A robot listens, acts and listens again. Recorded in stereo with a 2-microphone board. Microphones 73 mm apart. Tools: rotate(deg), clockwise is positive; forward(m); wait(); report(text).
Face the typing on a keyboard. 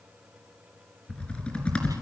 rotate(-15)
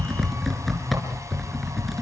report("Found it: typing on a keyboard, straight ahead.")